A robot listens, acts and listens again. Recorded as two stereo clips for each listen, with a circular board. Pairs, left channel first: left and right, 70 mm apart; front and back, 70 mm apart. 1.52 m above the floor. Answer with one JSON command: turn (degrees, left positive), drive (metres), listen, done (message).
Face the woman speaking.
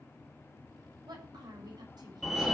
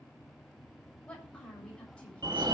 {"turn": -75}
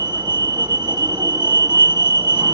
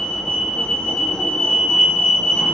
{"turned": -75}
{"listen": true}
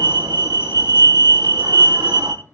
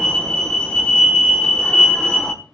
{"listen": true}
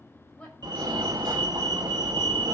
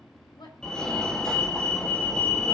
{"turn": 20}
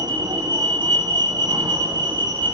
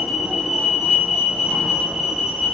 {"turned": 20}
{"listen": true}
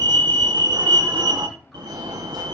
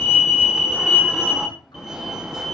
{"listen": true}
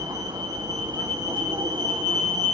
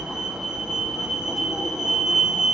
{"done": "I heard a woman speaking from this way, but can't make it out now."}